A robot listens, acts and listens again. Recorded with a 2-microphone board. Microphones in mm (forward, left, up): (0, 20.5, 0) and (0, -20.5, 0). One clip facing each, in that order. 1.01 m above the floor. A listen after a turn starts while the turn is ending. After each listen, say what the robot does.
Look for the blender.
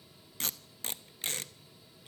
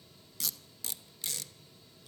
Keep listening.
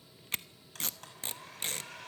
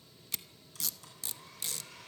Turn 50° left.
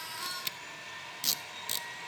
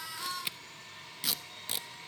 Turn 75° left.
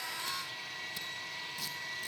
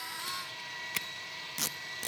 Facing the blender, over 4 m away.